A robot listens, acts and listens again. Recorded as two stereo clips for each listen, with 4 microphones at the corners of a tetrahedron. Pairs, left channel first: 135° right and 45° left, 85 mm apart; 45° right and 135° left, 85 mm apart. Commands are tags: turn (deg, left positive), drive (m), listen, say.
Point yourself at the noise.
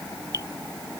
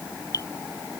<say>Facing the dripping.</say>